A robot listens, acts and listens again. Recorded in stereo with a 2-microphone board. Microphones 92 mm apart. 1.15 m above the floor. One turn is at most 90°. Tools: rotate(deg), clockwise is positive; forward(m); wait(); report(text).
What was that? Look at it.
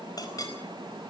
rotate(-45)
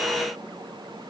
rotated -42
wait()
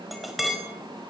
report("Found it: a clink, straight ahead.")